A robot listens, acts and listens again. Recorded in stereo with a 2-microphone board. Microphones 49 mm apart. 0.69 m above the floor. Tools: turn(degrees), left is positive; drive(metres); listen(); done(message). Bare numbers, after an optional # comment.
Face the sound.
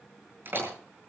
# The door slam: about 45° right or 135° right.
turn(-45)
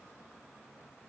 listen()
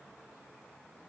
done("I heard a door slam, but can't make it out now. It was about straight ahead or 90° right.")